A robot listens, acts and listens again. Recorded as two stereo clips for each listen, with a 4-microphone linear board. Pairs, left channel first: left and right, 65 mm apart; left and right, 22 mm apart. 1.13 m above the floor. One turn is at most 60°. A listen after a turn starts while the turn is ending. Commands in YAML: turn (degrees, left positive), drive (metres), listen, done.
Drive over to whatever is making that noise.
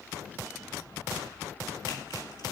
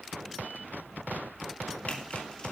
listen: true
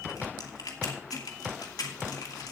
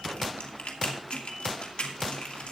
turn: 60
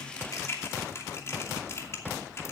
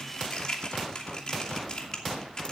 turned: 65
turn: 45
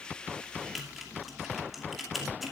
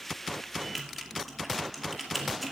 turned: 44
drive: 1.0
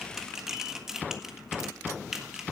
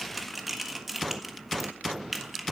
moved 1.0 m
drive: 1.0
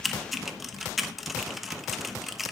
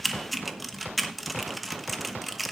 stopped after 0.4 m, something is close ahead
done: "Arrived at the typing on a keyboard, straight ahead."